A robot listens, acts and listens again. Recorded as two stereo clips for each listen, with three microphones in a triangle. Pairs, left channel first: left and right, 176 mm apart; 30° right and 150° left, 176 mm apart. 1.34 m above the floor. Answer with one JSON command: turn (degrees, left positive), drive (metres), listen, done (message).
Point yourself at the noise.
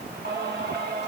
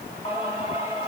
{"turn": -85}
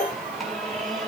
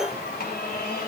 {"done": "Facing the singing, over 4 m away."}